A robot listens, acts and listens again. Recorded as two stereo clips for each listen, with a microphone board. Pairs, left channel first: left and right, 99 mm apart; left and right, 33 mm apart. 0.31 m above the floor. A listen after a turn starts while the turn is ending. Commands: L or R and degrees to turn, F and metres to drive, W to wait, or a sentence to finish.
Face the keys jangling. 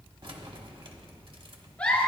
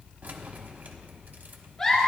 R55
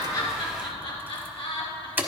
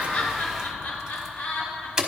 R20
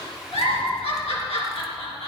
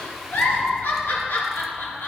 W
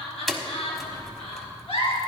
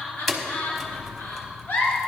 Facing the keys jangling, 1 to 2 m away.